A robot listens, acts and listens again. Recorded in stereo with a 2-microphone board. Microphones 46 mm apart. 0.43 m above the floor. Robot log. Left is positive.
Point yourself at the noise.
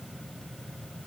cmd idle
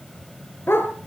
note: The dog barking: about 55° left or 125° left.
cmd yaw +55
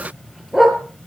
note: So it is at 10° right.
cmd yaw -10
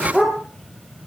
end: Facing the dog barking, over 4 m away.